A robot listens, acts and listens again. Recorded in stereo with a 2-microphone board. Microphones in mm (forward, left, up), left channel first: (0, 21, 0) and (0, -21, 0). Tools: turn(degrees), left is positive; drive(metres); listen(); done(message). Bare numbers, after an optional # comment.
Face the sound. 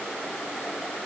listen()
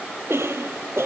turn(-90)
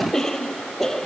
# So it is at 10° left.
turn(10)
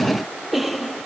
done("Found it: a cough, straight ahead.")